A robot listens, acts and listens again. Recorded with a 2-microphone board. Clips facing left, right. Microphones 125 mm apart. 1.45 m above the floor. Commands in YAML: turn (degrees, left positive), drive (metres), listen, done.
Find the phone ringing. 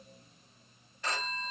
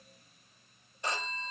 turn: -20
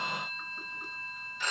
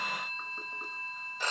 turn: -140
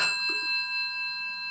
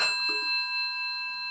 turn: -45
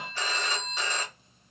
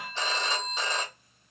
turn: -25
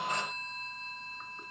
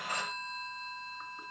turn: -10
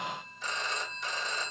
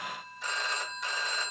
done: "Facing the phone ringing."